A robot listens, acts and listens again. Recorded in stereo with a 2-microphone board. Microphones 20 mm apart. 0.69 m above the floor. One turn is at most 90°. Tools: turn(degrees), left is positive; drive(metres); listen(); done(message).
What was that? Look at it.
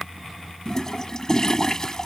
turn(degrees=35)
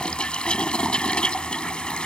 turn(degrees=90)
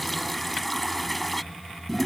done("Facing the toilet flushing.")